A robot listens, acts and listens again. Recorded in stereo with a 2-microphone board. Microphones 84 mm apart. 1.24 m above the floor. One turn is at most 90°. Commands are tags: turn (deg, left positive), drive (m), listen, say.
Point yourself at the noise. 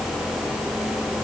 <listen/>
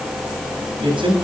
<turn deg="-75"/>
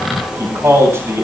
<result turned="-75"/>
<turn deg="-30"/>
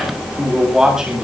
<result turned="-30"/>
<say>Found it: a man speaking, straight ahead.</say>